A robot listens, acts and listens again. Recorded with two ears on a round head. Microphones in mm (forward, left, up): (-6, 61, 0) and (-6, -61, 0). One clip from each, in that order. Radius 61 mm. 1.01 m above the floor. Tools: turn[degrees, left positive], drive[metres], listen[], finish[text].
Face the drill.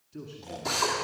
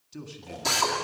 Thought: The drill: about 60° right or 120° right.
Action: turn[-60]
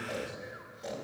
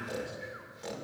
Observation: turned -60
Action: listen[]
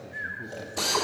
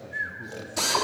Thought: So it is at 60° right.
Action: turn[-60]
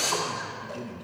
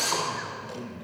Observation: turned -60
Thought: The drill is now 25° right.
Action: turn[-25]
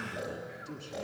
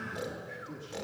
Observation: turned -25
Action: listen[]
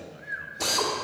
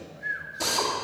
Thought: The drill is now 20° right.
Action: turn[-20]
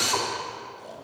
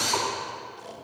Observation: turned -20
Action: finish[Found it: a drill, straight ahead, 2 to 4 m away.]